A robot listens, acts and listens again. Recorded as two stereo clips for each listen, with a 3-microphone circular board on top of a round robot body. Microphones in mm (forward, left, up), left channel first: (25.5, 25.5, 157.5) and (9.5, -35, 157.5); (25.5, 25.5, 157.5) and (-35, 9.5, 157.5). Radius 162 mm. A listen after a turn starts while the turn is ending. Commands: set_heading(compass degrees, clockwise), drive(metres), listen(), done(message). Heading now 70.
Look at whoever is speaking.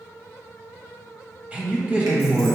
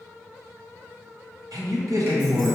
set_heading(240)
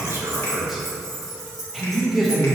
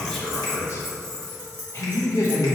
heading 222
set_heading(242)
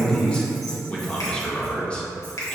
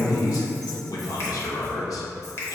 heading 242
done("Facing the man speaking, 1 to 2 m away.")